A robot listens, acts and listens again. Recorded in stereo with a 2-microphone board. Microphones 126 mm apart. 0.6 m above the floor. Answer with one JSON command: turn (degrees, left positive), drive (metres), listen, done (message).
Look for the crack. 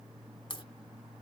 {"turn": 40}
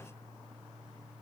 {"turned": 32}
{"listen": true}
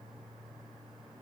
{"done": "I heard a crack, but can't make it out now. It was about 10° left or 105° left."}